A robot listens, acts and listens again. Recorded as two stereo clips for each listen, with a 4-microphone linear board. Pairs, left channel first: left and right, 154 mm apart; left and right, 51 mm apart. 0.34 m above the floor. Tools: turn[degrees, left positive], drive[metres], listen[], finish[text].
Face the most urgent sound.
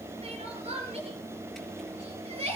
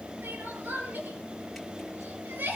Thought: The crying: about 45° right or 135° right.
Action: turn[-45]
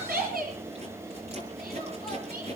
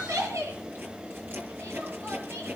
Thought: So it is at 85° right.
Action: turn[-85]
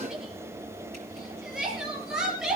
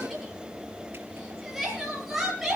Action: finish[Found it: crying, straight ahead, over 4 m away.]